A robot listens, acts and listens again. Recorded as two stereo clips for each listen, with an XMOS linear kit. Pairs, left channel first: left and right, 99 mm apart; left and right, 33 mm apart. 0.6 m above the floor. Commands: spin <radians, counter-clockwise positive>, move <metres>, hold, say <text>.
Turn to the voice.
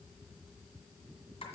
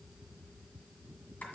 hold
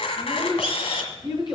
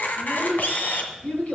spin 0.79
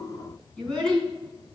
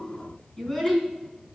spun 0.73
say Facing the child speaking.